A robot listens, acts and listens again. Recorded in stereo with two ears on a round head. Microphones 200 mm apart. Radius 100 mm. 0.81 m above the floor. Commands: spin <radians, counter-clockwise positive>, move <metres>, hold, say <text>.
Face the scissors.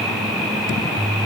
hold
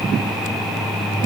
hold
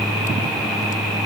say I can't make out scissors.